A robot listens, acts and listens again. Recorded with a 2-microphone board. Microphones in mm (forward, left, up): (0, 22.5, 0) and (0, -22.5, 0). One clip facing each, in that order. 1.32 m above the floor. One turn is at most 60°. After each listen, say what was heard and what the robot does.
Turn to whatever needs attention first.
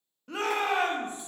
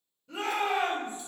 The shout: about 65° left or 115° left. Turn 60° left.
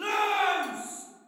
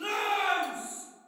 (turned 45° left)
So it is at 55° left. Turn 55° left.
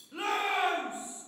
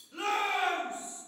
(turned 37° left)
The shout is now 20° left. Turn 20° left.
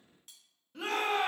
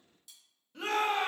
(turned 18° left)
Found it: a shout, straight ahead.